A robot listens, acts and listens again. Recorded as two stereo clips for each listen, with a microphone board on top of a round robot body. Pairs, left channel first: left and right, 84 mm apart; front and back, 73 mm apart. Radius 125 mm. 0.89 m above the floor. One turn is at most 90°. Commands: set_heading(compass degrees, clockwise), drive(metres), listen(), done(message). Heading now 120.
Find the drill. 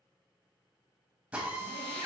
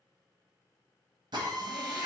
set_heading(210)
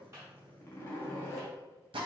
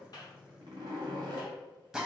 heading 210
set_heading(300)
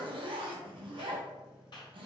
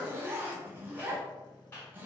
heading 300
set_heading(310)
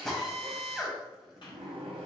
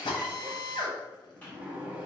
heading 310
done("Facing the drill.")